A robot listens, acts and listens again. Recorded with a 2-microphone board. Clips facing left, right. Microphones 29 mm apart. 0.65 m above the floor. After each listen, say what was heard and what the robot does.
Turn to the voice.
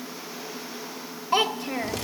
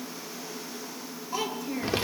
The child speaking: about 60° left or 120° left. Turn 60° left.
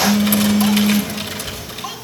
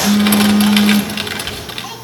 Keep listening.
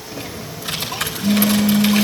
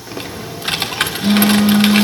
Keep listening.
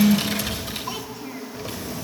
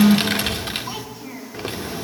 I heard a child speaking, but can't make it out now. It was about straight ahead or 60° left.